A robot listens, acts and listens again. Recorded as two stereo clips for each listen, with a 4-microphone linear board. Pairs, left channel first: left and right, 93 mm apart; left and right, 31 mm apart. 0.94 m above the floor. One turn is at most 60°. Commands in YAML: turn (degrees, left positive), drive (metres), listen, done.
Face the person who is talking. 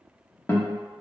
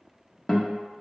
listen: true
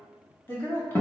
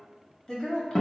turn: 25
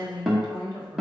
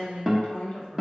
turn: 60
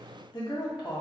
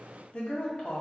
turn: 60
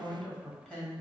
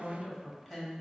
turn: 10
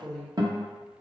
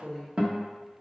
done: "Facing the woman speaking, 1 to 2 m away."